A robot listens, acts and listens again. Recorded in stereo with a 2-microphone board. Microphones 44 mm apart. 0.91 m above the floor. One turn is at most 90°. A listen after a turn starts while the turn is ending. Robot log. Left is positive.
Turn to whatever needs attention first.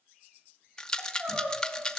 note: The crying: about 50° right or 130° right.
cmd yaw -50
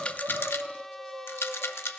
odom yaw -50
note: So it is at 80° right.
cmd yaw -80
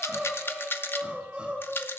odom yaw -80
note: The crying is now 25° right.
cmd yaw -25
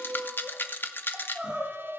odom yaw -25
note: The crying is now 20° right.
cmd yaw -20
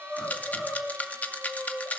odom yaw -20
end: Facing the crying.